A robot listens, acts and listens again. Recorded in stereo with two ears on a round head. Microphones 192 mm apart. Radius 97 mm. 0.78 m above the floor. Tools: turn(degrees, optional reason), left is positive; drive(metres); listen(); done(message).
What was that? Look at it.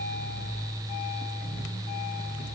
listen()
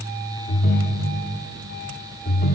turn(degrees=45, reason="The ringtone: about 45° left or 135° left.")
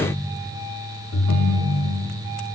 turn(degrees=90, reason="So it is at 90° left.")
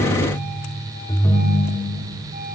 turn(degrees=15, reason="The ringtone is now 15° left.")
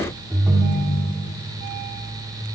done("Facing the ringtone.")